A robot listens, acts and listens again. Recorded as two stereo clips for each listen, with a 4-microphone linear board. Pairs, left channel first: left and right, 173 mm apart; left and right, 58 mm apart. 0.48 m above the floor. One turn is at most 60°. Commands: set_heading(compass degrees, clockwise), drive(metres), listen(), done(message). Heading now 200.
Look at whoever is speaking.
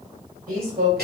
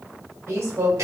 set_heading(255)
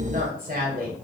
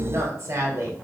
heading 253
set_heading(313)
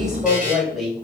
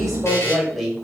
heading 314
done("Found it: a woman speaking, straight ahead, 1 to 2 m away.")